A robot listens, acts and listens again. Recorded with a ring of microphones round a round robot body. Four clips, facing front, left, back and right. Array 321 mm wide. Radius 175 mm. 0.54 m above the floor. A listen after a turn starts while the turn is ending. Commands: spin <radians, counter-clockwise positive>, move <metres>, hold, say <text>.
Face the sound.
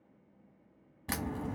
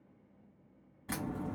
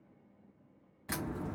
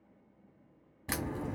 spin -0.87
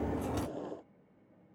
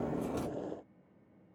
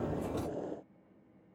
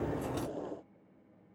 say Facing where the crack came from. I can't hear it now.